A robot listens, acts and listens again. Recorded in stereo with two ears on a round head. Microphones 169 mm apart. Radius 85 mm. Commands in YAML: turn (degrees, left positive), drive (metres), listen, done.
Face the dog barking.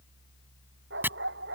turn: -65
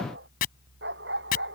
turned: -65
turn: -60
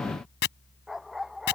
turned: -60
done: "Found it: a dog barking, straight ahead."